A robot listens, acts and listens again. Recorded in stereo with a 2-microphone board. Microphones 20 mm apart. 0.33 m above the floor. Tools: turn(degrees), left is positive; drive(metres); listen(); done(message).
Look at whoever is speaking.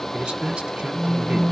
turn(degrees=-55)
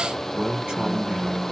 turn(degrees=-60)
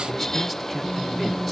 listen()
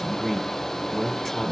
done("Facing the man speaking.")